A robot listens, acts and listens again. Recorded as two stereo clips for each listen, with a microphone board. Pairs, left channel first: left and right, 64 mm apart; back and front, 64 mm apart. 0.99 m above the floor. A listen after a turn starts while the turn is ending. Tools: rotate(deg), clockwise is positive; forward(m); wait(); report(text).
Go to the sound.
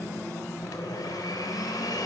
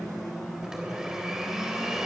rotate(-85)
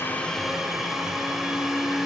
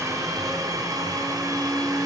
forward(1.0)
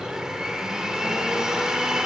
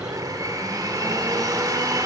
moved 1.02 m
rotate(10)
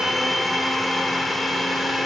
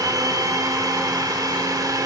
forward(1.0)
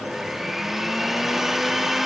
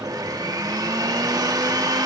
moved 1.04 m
forward(1.0)
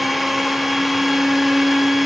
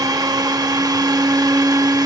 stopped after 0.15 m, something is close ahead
report("I am next to the blender.")